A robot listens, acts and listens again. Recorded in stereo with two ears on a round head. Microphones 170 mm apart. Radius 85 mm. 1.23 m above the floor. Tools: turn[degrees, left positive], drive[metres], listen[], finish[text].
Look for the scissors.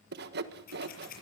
Thought: The scissors: about 50° left or 130° left.
Action: turn[50]
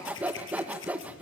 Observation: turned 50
Thought: So it is at 75° left.
Action: turn[75]
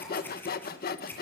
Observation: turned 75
Thought: The scissors is now 10° left.
Action: turn[10]
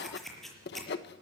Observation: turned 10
Action: finish[Facing the scissors, over 4 m away.]